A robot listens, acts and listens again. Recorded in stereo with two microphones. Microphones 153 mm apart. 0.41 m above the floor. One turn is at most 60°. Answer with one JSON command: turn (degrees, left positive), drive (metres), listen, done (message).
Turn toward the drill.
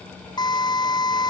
{"turn": 30}
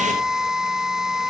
{"done": "Found it: a drill, straight ahead."}